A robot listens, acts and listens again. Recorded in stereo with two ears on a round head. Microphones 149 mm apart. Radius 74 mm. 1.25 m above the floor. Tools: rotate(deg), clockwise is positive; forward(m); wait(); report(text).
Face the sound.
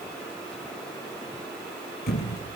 rotate(-60)
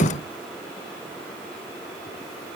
rotate(-35)
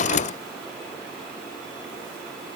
report("Facing where the thud came from. I can't hear it now.")